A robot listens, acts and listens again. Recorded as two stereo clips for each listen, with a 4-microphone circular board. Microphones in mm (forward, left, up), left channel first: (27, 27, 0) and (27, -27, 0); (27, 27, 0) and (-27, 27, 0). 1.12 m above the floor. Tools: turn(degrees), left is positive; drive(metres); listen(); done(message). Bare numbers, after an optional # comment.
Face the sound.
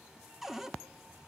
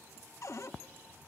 done("Facing the cupboard door, under 1 m away.")